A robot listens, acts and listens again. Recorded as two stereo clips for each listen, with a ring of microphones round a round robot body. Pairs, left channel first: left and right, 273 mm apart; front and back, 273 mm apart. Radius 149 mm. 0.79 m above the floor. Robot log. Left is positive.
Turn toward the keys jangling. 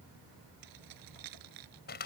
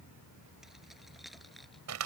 note: The keys jangling: 90° right.
cmd yaw -90
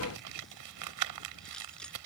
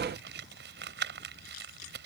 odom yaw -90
cmd idle
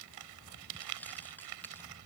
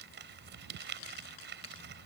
end: Facing the keys jangling.